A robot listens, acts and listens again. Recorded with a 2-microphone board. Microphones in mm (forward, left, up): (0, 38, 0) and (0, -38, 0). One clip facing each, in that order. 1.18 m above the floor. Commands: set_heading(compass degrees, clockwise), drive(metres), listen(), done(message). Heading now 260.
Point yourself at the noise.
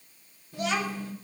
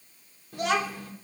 set_heading(320)
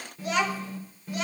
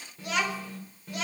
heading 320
done("Found it: a child speaking, straight ahead, 2 to 4 m away.")